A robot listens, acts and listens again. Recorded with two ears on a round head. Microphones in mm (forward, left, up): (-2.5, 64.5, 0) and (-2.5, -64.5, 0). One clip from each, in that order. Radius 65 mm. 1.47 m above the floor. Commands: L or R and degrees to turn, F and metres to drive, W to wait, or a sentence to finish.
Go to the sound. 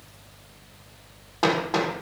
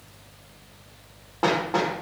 L90
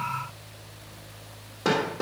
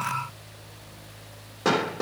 F1.0
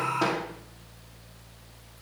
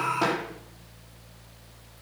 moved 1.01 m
F1.0
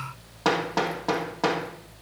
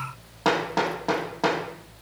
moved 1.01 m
F1.0
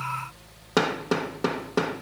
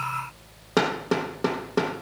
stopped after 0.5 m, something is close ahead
L10
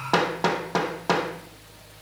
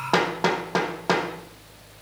Arrived at the hammering, straight ahead.